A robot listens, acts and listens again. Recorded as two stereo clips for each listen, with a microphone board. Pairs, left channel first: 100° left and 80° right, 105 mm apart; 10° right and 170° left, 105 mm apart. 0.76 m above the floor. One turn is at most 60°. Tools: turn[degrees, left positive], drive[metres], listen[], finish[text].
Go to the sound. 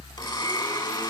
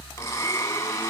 Thought: The blender: 55° left.
Action: turn[55]
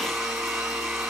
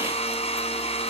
Thought: The blender is now 10° left.
Action: turn[10]
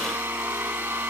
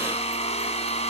Action: drive[1.0]
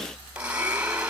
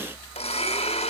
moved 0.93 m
Action: drive[1.0]
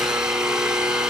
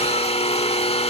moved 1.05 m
Action: drive[1.0]
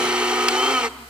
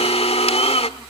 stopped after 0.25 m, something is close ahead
Action: finish[I am next to the blender.]